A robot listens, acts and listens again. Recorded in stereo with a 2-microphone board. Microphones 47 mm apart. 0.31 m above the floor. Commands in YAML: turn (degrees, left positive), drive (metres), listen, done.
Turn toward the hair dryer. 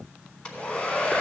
turn: 25
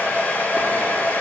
turn: 135
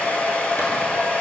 turn: 40
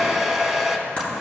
done: "Facing the hair dryer."